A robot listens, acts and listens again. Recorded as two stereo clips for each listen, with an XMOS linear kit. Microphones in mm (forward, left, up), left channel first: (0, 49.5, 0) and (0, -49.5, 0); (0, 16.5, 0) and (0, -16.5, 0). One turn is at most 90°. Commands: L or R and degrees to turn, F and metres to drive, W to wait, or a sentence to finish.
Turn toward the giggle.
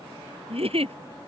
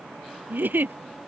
R90
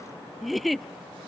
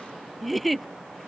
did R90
Facing the giggle.